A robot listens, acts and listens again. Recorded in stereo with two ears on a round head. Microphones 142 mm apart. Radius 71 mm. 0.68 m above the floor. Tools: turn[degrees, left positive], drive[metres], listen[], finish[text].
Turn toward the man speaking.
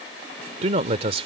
Thought: The man speaking: about 35° right or 145° right.
Action: turn[-35]
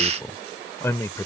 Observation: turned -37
Thought: So it is at 20° left.
Action: turn[20]
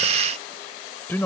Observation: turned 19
Thought: The man speaking is now 15° left.
Action: turn[15]
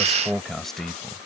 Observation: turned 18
Action: finish[Found it: a man speaking, straight ahead.]